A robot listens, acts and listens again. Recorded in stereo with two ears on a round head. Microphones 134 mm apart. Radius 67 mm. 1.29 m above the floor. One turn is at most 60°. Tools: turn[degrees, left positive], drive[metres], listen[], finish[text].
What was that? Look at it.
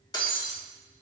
Thought: The breaking glass: about 25° left or 155° left.
Action: turn[25]
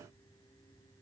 Action: listen[]
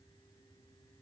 Action: finish[I heard breaking glass, but can't make it out now. It was about straight ahead or 130° left.]